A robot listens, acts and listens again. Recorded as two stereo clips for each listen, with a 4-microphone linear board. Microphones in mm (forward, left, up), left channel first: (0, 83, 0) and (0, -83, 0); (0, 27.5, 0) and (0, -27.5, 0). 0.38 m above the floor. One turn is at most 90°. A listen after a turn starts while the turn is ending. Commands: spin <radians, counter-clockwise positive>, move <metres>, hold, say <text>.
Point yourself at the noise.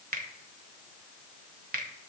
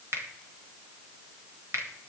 spin -1.05
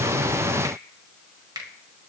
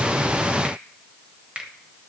spin -0.52
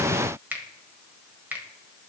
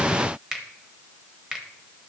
spin -0.26
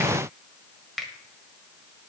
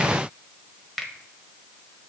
say Facing the finger snap.